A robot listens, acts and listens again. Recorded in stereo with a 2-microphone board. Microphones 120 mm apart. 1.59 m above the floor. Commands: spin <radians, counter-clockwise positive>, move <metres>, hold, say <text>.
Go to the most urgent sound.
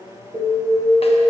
spin -1.22
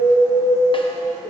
move 1.0
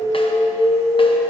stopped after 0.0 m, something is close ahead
spin -0.17
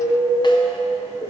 say Blocked. The alarm is further on, straight ahead.